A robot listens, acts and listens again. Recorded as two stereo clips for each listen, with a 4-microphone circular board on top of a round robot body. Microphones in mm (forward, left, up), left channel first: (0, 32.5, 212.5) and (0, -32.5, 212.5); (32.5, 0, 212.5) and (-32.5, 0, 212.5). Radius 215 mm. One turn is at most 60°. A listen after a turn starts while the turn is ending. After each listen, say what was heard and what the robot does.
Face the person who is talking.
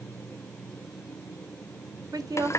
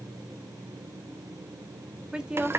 The woman speaking: 100° right. Turn 60° right.
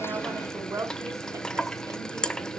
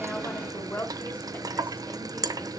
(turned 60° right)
The woman speaking is now 60° right. Turn 60° right.
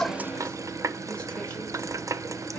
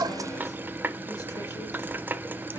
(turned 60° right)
Keep listening.
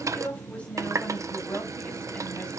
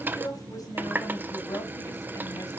The woman speaking is now 15° left. Turn 15° left.
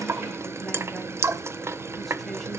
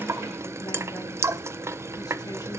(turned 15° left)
Keep listening.
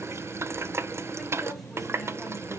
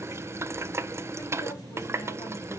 Keep listening.
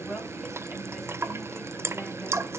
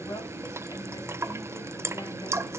Found it: a woman speaking, straight ahead, over 4 m away.